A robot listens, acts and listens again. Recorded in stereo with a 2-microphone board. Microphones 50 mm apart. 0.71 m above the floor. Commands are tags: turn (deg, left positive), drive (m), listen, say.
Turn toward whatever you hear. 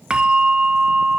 <turn deg="-20"/>
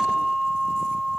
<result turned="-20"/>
<say>Found it: a bell, straight ahead.</say>